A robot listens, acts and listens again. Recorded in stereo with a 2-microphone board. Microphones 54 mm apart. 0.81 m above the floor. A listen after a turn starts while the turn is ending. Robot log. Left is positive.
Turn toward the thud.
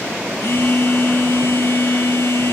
cmd idle
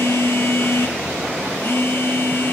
cmd idle
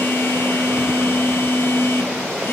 end: I can't make out a thud to turn to.